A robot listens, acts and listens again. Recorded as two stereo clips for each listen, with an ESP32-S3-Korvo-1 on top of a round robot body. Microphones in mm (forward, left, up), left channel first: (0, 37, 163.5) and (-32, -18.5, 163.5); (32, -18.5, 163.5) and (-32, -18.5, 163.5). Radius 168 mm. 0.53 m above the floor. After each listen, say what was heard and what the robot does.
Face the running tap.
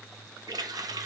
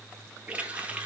The running tap: 110° right. Turn 110° right.
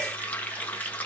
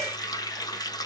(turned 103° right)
Found it: a running tap, straight ahead, 1 to 2 m away.